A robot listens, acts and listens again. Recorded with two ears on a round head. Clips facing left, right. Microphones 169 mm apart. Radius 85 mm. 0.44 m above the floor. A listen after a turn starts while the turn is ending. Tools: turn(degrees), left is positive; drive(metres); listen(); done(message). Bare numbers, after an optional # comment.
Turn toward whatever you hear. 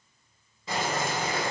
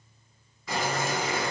# The boiling: about 20° left or 160° left.
turn(20)
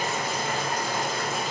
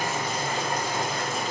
done("Facing the boiling.")